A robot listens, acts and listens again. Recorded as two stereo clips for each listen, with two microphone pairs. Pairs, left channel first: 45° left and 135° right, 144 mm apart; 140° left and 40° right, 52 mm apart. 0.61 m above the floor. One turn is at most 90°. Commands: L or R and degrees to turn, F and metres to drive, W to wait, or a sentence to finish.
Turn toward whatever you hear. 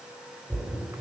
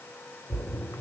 L90
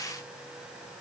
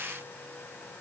L65
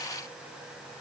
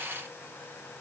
Facing where the splash came from. I can't hear it now.